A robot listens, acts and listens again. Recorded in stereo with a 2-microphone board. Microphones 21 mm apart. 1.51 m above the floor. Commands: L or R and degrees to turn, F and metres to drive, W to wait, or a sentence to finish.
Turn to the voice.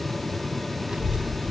R45
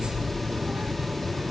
R85
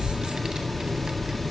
R25
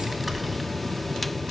Found it: a child speaking, straight ahead.